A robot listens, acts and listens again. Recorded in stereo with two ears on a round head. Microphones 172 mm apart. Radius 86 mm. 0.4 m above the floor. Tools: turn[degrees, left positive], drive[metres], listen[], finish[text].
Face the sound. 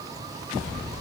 Action: listen[]
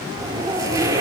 Thought: The zipper: about 20° right or 160° right.
Action: turn[-20]
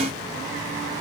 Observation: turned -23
Action: listen[]
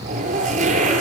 Thought: So it is at 140° right.
Action: turn[-140]
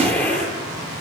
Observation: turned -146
Thought: The zipper is now 10° left.
Action: turn[10]
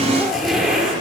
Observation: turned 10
Action: finish[Found it: a zipper, straight ahead, over 4 m away.]